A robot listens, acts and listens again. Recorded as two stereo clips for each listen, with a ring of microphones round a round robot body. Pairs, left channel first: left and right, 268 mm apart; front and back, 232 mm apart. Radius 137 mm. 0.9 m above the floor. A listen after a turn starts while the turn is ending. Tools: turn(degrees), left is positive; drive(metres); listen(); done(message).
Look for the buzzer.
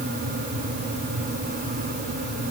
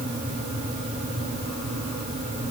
listen()
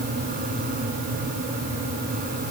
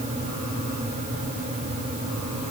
listen()
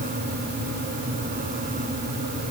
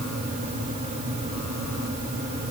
done("I can't make out a buzzer.")